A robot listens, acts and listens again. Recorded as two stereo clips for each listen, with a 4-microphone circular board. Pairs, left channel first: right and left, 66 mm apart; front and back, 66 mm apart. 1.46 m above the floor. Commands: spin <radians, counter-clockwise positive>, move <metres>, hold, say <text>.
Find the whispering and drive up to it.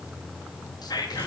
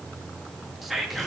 spin -1.57
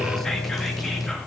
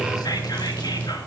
hold
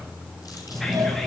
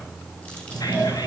hold
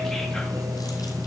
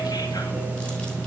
say Facing where the whispering came from. I can't hear it now. I did not reach it.